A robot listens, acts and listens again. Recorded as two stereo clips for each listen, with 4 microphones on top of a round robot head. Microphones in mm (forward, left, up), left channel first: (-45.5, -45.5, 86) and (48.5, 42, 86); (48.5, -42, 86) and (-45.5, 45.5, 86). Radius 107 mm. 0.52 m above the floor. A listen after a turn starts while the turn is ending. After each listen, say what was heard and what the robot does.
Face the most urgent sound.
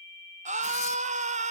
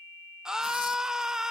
The scream: 50° left. Turn 50° left.
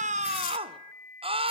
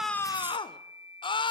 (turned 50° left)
Found it: a scream, straight ahead.